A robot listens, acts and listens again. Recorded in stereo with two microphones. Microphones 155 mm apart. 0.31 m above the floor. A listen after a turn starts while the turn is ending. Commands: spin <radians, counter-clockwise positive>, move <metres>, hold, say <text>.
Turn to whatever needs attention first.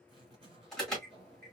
spin 0.52
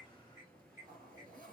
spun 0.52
hold
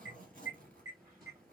spin -0.52
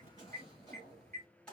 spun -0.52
say Facing the alarm.